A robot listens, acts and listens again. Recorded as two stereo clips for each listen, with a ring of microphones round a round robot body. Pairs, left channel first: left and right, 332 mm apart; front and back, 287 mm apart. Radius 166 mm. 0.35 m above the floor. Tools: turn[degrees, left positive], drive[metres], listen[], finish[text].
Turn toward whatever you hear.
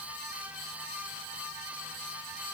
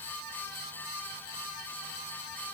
Action: listen[]
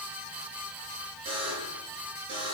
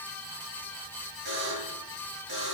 Thought: The buzzer: 165° right.
Action: turn[-165]
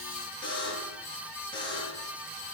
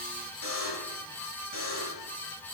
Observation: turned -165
Thought: The buzzer is now 15° left.
Action: turn[15]
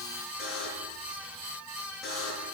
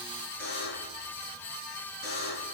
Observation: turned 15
Action: finish[Found it: a buzzer, straight ahead, over 4 m away.]